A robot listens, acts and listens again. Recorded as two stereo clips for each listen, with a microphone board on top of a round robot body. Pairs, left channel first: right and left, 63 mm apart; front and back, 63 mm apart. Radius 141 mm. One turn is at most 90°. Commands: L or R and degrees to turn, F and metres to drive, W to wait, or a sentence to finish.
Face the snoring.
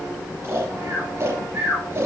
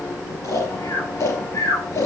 L40
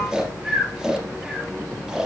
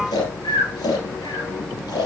Found it: snoring, straight ahead.